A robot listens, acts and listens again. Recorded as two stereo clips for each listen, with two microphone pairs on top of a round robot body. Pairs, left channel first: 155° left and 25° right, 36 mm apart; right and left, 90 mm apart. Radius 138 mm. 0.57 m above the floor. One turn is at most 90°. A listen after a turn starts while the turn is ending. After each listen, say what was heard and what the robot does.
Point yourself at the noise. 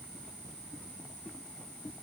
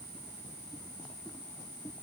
Keep listening.
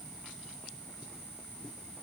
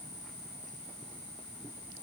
Keep listening.
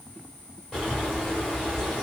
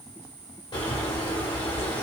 The bird: 125° right. Turn 90° right.
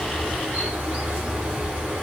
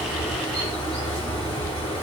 The bird is now 55° right. Turn 55° right.
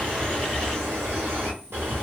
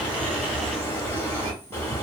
The bird is now 25° right. Turn 25° right.
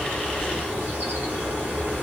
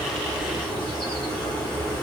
Facing the bird, 1 to 2 m away.